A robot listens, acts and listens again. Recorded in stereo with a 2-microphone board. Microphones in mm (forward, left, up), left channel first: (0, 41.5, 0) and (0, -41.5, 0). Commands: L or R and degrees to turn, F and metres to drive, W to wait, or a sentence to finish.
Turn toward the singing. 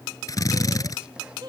R60
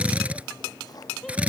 W
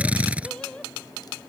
L10
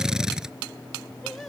W
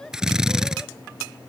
Found it: singing, straight ahead.